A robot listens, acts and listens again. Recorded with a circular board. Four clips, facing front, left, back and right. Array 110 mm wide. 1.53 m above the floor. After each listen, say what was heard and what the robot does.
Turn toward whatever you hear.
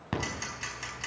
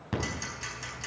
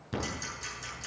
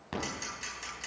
Facing the ticking, over 4 m away.